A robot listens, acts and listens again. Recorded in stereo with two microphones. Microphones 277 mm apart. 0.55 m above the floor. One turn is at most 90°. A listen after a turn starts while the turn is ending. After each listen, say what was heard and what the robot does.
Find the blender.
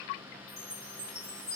Keep listening.
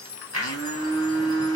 The blender: about 65° right or 115° right. Turn 65° right.
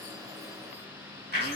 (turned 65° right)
So it is at 40° right. Turn 40° right.
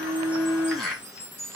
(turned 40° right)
Facing the blender.